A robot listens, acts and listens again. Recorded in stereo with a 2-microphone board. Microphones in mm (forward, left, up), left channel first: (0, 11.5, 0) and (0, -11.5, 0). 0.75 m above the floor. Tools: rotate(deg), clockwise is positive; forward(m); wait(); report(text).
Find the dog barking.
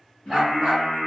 rotate(20)
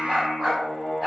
rotate(15)
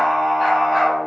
wait()
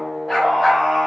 rotate(-30)
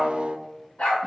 rotate(-125)
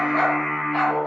rotate(-15)
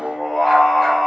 wait()
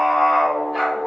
report("Found it: a dog barking, straight ahead.")